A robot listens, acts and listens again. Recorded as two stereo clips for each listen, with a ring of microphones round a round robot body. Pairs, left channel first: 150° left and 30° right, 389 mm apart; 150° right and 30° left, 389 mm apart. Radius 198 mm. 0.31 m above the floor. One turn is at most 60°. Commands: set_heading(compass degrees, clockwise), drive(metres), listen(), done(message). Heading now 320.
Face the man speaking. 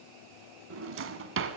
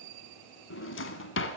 listen()
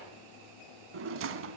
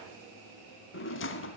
listen()
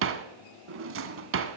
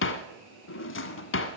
done("I can't make out a man speaking to turn to.")